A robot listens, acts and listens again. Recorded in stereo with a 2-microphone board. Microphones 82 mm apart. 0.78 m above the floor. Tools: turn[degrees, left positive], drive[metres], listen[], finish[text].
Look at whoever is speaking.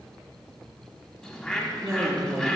Thought: The woman speaking: about 35° right or 145° right.
Action: turn[-35]
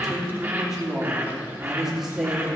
Action: finish[Facing the woman speaking, 1 to 2 m away.]